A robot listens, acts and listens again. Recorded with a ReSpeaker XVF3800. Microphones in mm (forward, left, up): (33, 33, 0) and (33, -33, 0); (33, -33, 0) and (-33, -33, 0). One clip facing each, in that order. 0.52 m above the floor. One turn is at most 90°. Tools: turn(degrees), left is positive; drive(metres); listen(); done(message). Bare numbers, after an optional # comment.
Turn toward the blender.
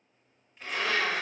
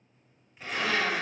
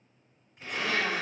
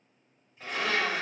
# The blender: 175° right.
turn(-90)
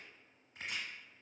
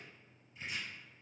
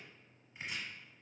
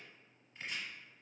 # Nothing new. It was at 85° right.
turn(-85)
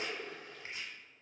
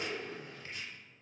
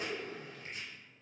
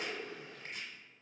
# The blender is now 10° right.
turn(-10)
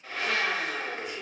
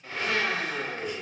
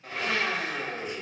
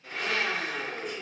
done("Facing the blender, 1 to 2 m away.")